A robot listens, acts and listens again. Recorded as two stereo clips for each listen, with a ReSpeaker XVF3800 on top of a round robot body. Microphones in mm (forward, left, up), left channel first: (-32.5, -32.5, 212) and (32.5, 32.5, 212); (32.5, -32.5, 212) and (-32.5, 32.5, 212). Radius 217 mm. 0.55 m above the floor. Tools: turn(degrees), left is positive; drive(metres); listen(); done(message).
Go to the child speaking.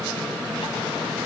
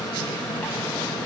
listen()
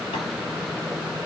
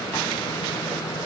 listen()
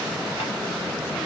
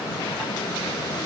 done("I can't make out a child speaking.")